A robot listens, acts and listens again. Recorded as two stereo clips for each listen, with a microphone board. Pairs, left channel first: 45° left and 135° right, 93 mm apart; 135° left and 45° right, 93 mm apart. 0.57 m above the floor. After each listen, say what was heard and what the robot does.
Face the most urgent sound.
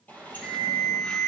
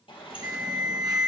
The alarm: 25° right. Turn 25° right.
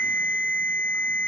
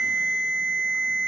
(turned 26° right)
Facing the alarm.